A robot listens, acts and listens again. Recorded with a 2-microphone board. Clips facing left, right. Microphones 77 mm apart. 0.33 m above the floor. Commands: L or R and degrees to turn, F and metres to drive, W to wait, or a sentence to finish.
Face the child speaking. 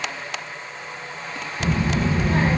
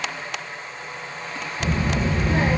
L50
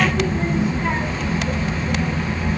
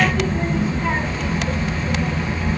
Facing the child speaking, 1 to 2 m away.